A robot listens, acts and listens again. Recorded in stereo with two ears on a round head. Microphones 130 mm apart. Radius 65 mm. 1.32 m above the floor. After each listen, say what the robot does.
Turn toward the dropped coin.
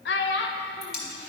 Turn 30° left.
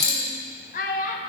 Turn 150° left.
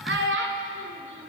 Facing where the dropped coin came from. I can't hear it now.